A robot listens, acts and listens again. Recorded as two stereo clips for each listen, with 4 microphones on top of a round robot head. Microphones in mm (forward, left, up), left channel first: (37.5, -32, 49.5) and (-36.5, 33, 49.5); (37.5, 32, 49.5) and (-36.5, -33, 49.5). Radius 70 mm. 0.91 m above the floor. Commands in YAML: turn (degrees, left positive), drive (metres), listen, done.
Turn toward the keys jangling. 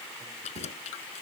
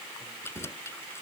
turn: -25
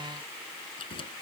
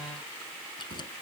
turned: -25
done: "Found it: keys jangling, straight ahead."